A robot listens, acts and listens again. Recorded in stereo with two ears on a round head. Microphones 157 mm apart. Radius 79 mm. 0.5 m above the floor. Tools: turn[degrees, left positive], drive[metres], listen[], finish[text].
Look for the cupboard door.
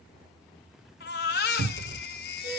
Thought: The cupboard door: about 70° right or 110° right.
Action: turn[-70]
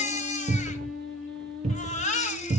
Thought: So it is at 35° right.
Action: turn[-35]
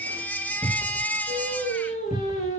Action: finish[Facing the cupboard door.]